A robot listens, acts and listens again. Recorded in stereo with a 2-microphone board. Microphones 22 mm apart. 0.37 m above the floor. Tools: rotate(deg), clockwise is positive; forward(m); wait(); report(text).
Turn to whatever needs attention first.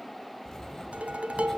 wait()
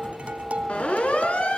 rotate(-65)
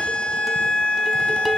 rotate(-45)
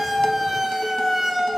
report("Facing the siren.")